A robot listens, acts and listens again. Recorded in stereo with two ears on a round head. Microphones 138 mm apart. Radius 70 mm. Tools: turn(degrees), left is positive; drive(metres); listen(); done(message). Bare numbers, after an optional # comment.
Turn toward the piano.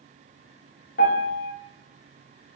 # The piano: about 60° left or 120° left.
turn(60)
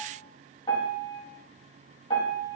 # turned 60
# So it is at 35° left.
turn(35)
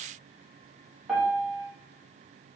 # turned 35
done("Found it: a piano, straight ahead.")